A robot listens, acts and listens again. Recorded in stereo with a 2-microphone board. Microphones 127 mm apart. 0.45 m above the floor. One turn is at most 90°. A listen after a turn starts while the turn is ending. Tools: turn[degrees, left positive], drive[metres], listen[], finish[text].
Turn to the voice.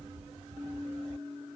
Action: listen[]
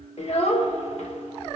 Thought: The child speaking: about 60° left or 120° left.
Action: turn[60]
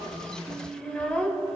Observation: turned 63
Thought: So it is at 10° left.
Action: turn[10]
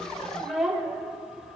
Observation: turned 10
Action: finish[Facing the child speaking, under 1 m away.]